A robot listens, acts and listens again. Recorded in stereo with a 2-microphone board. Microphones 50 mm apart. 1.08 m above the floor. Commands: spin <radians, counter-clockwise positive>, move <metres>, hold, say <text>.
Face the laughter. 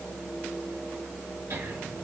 spin -1.31
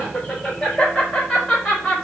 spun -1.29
say Found it: laughter, straight ahead.